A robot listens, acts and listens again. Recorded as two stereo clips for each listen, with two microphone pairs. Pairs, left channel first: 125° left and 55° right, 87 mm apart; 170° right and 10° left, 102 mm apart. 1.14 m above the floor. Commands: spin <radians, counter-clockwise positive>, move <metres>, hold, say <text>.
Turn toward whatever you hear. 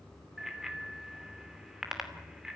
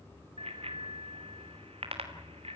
spin 0.52
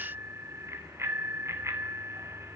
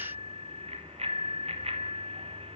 say Facing the bicycle bell, 2 to 4 m away.